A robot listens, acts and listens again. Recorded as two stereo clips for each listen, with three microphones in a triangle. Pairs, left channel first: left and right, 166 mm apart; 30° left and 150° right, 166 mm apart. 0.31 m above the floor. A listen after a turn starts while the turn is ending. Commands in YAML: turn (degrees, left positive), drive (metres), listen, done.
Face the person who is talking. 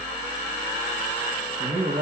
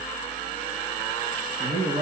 turn: -125
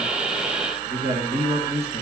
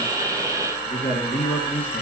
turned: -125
turn: -50
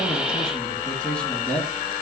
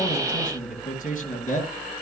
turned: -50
done: "Found it: a man speaking, straight ahead."